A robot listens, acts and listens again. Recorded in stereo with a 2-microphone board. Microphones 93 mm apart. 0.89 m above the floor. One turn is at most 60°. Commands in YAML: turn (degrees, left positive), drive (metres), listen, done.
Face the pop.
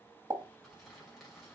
turn: -45
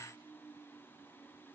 listen: true
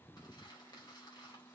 done: "I heard a pop, but can't make it out now. It was about straight ahead or 90° right."